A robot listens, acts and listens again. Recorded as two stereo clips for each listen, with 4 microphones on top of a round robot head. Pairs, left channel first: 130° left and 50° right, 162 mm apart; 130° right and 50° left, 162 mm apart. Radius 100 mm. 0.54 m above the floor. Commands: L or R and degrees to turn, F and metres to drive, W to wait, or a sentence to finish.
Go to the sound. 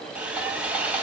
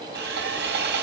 L35
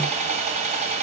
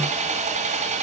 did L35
F1.0
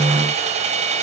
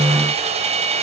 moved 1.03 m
F1.0
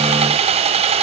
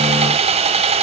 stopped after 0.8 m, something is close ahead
I am next to the sawing.